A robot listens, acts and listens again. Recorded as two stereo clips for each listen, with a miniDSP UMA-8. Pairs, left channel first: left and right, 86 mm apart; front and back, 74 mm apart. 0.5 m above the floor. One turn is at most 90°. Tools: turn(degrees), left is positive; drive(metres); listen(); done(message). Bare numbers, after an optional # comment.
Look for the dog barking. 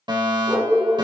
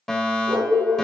# The dog barking: 160° right.
turn(-90)
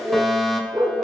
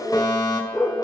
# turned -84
# The dog barking is now 65° right.
turn(-65)
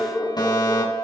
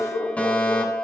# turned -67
done("Found it: a dog barking, straight ahead, over 4 m away.")